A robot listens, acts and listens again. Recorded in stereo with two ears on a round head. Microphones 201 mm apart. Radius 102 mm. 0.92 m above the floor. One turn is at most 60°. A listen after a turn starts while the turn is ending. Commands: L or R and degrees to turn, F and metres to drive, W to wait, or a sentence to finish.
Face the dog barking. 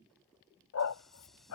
L60
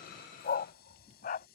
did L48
L40
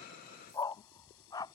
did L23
L15
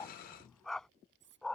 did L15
Found it: a dog barking, straight ahead.